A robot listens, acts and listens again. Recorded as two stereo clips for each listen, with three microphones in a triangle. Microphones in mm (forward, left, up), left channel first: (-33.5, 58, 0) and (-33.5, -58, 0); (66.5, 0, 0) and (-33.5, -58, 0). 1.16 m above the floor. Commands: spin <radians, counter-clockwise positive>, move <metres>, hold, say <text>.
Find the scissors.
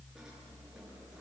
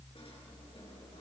hold
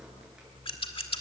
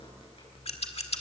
spin 0.96
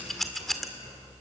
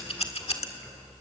say Facing the scissors, 1 to 2 m away.